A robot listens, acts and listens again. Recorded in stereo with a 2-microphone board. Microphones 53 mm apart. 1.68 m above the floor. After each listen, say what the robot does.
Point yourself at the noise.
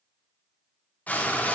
Turn 25° left.
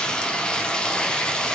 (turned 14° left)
Turn 15° left.
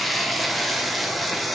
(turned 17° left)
Facing the frying, 1 to 2 m away.